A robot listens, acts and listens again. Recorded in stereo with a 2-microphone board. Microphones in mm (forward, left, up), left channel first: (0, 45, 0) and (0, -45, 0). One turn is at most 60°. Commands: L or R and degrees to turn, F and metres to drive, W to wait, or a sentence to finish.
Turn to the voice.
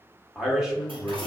R30
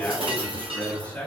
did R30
L20
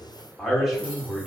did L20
Found it: a man speaking, straight ahead, 1 to 2 m away.